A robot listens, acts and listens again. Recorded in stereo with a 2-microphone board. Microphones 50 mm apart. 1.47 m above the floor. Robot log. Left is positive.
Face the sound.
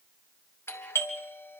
note: The doorbell: about 60° left or 120° left.
cmd yaw +60
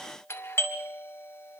note: So it is at 60° left.
cmd yaw +60
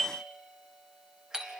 note: The doorbell is now 15° right.
cmd yaw -15
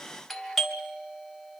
end: Facing the doorbell.